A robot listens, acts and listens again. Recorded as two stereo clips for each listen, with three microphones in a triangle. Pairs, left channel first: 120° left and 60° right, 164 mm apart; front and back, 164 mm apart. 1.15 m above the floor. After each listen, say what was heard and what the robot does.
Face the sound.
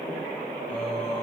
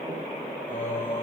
The singing: 35° left. Turn 35° left.
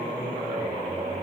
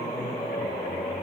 Facing the singing.